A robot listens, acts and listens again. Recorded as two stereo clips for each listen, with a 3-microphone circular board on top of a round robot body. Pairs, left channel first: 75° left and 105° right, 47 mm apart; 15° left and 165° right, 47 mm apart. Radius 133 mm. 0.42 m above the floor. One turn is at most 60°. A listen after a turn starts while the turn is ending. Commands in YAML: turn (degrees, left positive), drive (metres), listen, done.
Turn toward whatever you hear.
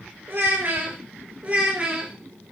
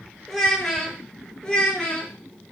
turn: -50
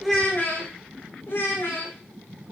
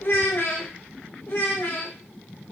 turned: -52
turn: 60
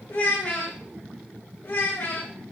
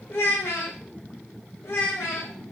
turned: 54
turn: 40
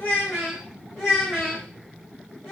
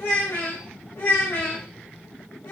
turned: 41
done: "Found it: a child speaking, straight ahead, 2 to 4 m away."